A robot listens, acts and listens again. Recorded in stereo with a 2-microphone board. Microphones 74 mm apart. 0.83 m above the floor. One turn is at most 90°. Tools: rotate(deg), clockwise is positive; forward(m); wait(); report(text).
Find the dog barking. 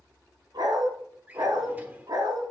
rotate(65)
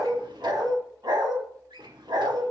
rotate(80)
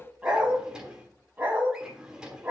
rotate(20)
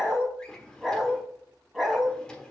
report("Facing the dog barking.")